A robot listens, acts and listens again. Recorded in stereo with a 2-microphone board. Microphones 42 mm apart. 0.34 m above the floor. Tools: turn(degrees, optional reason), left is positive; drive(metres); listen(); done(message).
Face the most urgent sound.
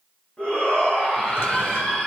turn(degrees=35, reason="The shout: about 35° left or 145° left.")
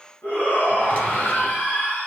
turn(degrees=105, reason="So it is at 105° left.")
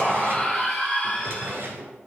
turn(degrees=10, reason="The shout is now 10° left.")
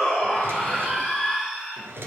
done("Facing the shout, 2 to 4 m away.")